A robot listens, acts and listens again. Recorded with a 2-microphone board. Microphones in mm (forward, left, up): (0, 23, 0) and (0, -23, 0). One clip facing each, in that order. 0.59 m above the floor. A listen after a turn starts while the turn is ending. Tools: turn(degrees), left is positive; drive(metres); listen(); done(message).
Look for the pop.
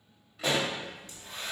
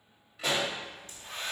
turn(degrees=-30)
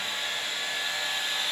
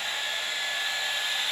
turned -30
listen()
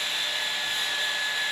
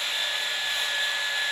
done("I heard a pop, but can't make it out now. It was about 25° left or 145° right.")